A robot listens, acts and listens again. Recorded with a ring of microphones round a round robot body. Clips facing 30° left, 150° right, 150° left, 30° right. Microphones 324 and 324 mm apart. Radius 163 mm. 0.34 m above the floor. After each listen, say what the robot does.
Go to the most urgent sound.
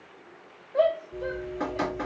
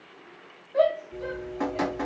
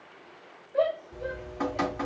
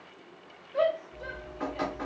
Turn 90° right.
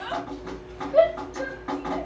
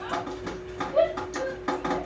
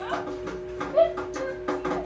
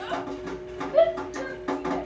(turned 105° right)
Turn 15° left.
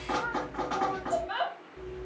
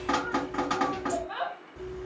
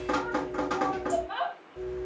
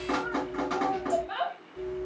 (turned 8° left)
Drive 1.0 m forward.
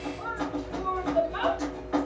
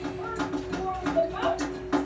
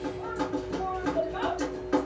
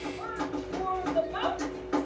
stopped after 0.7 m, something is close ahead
I am next to the shout.